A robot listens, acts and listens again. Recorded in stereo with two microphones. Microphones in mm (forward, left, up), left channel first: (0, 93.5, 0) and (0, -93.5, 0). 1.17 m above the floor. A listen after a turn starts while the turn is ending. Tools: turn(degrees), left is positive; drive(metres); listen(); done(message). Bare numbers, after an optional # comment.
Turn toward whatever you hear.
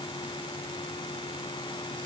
listen()
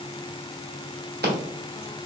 # The scissors: about 60° right or 120° right.
turn(-60)
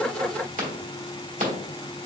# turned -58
# So it is at 50° right.
turn(-50)
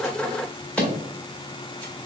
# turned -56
done("Facing the scissors, 1 to 2 m away.")